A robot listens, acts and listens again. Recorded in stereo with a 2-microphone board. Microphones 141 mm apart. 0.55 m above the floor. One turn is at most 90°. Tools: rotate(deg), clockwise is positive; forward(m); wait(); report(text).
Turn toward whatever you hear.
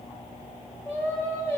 rotate(-15)
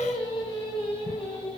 rotate(-40)
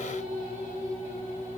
rotate(-90)
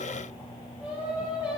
rotate(10)
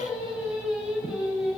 report("Facing the singing.")